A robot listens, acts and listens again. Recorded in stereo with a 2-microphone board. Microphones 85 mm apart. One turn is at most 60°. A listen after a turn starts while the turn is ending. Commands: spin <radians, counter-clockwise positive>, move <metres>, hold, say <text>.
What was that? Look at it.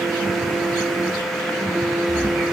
spin 1.05
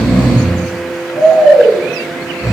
spin 0.70
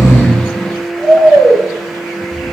say Found it: snoring, straight ahead, under 1 m away.